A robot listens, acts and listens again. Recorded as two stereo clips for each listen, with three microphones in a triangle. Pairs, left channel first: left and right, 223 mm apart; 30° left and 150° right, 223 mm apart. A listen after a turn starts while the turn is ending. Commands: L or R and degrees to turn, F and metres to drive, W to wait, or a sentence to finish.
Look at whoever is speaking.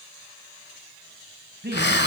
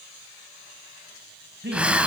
R120
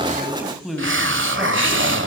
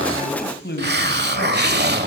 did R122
Found it: a man speaking, straight ahead, 2 to 4 m away.